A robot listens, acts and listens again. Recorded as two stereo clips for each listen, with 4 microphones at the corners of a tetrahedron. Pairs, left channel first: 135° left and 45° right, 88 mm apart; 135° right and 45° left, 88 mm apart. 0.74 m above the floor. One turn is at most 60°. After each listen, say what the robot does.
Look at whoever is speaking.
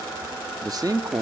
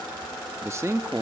Turn 10° right.
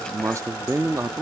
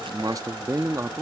Facing the man speaking.